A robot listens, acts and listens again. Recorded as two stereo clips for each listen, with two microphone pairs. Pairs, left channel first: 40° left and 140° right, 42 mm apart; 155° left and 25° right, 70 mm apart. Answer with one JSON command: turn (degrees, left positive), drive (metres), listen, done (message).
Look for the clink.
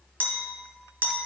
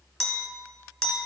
{"turn": -120}
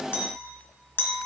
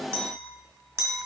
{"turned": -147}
{"turn": 25}
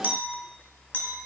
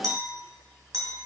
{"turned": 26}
{"done": "Found it: a clink, straight ahead."}